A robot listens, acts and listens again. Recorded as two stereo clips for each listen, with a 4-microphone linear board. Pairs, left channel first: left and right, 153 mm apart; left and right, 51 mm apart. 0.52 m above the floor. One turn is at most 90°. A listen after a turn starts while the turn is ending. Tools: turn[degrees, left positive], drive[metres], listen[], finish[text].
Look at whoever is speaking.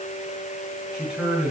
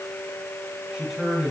Action: turn[-30]
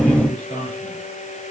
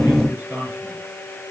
Thought: So it is at 145° right.
Action: turn[-90]
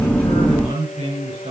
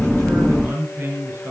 Thought: The man speaking is now 45° right.
Action: turn[-45]
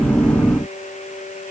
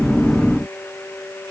Action: listen[]
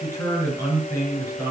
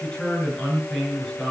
Thought: The man speaking is now 15° left.
Action: turn[15]
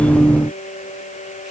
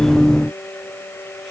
Action: listen[]
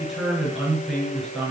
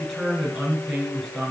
Action: finish[Facing the man speaking, over 4 m away.]